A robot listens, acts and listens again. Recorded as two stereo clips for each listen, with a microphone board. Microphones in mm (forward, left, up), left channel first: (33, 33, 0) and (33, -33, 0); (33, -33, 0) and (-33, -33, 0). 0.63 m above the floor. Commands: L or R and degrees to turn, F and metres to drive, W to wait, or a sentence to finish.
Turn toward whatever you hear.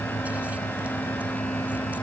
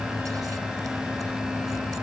W
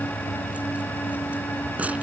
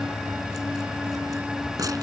W
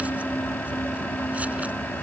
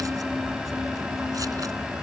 I can't make out anything.